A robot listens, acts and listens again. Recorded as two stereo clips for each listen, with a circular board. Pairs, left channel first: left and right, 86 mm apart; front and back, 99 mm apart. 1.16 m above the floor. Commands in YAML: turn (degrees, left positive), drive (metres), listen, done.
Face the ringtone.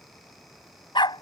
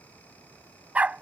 listen: true
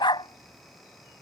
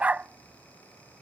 listen: true
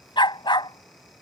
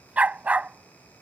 done: "I can't make out a ringtone to turn to."